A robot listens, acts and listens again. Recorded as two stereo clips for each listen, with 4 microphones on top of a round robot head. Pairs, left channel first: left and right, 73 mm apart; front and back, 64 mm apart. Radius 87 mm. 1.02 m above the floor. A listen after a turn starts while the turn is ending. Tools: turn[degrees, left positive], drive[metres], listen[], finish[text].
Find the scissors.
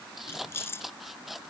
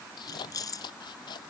Action: finish[Found it: scissors, straight ahead.]